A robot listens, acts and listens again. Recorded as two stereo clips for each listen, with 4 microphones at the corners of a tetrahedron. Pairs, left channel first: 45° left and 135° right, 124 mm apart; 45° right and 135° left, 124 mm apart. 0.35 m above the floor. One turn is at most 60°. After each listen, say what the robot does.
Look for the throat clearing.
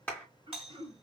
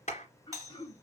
Turn 60° right.
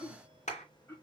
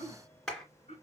Turn 20° right.
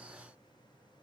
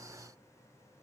Keep listening.
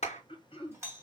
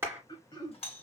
Facing the throat clearing.